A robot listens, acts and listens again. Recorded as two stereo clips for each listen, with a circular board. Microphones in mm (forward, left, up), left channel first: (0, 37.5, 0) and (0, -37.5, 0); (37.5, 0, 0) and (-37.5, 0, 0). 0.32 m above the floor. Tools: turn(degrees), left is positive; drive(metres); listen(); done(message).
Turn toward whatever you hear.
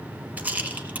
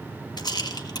turn(degrees=-20)
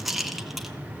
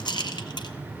done("Facing the rattle, 1 to 2 m away.")